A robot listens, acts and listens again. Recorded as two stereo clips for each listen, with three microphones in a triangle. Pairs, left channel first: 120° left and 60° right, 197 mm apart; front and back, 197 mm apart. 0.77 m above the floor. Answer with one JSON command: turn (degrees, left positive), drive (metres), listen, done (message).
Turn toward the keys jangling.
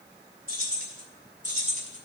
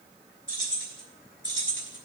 {"turn": -10}
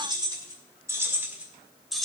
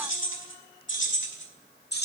{"turn": 35}
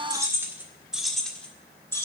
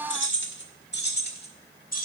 {"turn": 45}
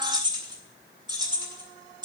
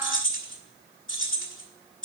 {"done": "Facing the keys jangling, 1 to 2 m away."}